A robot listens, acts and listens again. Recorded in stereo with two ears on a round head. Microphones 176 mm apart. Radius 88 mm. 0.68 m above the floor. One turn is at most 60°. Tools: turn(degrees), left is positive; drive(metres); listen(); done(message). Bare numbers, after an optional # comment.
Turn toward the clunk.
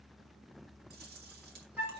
listen()
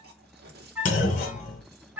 # The clunk: about 45° left or 135° left.
turn(45)
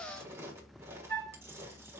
listen()
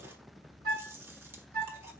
done("I heard a clunk, but can't make it out now. It was about straight ahead or 90° left.")